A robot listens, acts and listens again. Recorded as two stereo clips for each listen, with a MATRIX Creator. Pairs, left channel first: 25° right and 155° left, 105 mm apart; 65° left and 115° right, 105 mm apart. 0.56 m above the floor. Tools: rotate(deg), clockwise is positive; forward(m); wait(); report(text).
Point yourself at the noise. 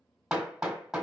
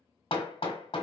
rotate(-75)
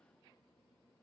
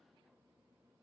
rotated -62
rotate(-10)
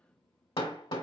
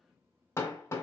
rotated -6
report("Found it: hammering, straight ahead, 1 to 2 m away.")